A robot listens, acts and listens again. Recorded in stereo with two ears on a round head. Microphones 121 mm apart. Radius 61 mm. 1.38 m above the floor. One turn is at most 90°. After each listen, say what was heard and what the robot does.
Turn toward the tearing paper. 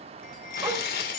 The tearing paper: about 75° left or 105° left. Turn 75° left.
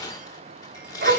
So it is at 25° left. Turn 25° left.
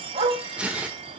The tearing paper is now 10° right. Turn 10° right.
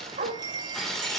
Found it: tearing paper, straight ahead.